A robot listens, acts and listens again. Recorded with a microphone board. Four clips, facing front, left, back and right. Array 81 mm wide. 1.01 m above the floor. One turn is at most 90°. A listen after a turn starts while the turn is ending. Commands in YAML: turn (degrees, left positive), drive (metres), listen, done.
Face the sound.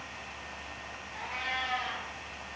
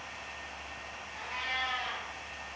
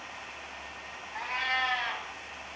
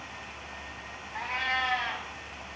turn: -90
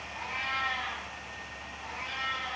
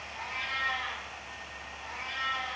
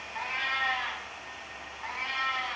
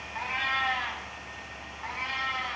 turn: -90
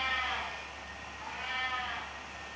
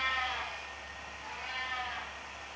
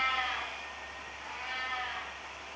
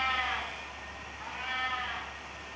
turn: -75
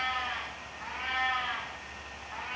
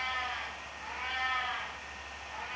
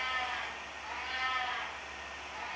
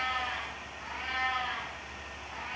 done: "Facing the cat meowing."